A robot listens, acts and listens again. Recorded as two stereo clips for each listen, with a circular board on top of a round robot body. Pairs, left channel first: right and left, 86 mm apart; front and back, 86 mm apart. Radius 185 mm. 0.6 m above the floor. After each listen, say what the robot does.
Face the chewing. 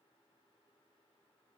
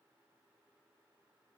Keep listening.
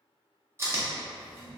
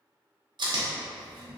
Turn 150° left.
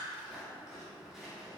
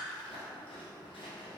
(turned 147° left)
Keep listening.
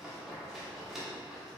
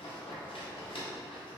Found it: chewing, straight ahead, 1 to 2 m away.